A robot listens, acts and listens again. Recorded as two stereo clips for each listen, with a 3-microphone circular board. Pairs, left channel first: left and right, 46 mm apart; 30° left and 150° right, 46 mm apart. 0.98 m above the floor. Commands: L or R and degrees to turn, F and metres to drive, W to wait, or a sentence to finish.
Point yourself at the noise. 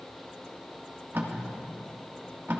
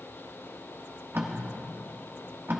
R120
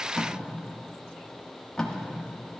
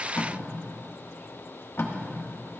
L20
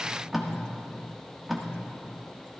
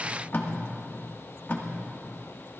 Facing the tape being pulled, 1 to 2 m away.